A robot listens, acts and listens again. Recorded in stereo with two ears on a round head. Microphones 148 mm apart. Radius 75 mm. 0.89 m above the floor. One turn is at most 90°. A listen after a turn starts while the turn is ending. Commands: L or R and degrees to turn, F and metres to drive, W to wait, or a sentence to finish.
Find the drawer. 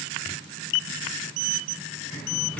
W
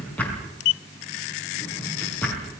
L30
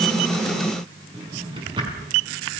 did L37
R30
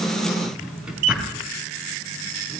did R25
Found it: a drawer, straight ahead, over 4 m away.